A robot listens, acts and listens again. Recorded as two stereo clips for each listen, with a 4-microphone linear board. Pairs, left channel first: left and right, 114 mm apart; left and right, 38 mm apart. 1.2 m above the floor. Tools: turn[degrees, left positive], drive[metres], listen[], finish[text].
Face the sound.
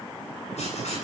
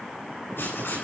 Action: turn[90]
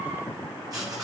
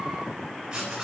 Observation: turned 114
Thought: So it is at 35° right.
Action: turn[-35]
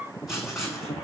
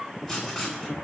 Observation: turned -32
Action: finish[Found it: writing, straight ahead.]